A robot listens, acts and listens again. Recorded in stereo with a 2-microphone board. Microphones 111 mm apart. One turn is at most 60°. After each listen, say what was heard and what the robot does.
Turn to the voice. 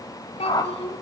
The child speaking: about 70° left or 110° left. Turn 60° left.
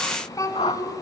So it is at 35° left. Turn 35° left.
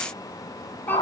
Keep listening.
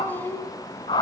The child speaking is now 20° left. Turn 20° left.
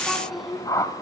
Found it: a child speaking, straight ahead.